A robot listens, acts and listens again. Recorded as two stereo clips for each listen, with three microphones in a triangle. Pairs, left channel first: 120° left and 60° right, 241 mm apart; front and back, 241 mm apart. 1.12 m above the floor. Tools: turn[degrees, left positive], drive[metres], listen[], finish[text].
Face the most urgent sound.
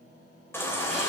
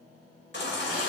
Thought: The baby crying: 40° left.
Action: turn[40]
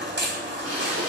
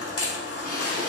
Thought: The baby crying is now 15° right.
Action: turn[-15]
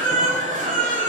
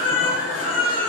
Action: finish[Facing the baby crying.]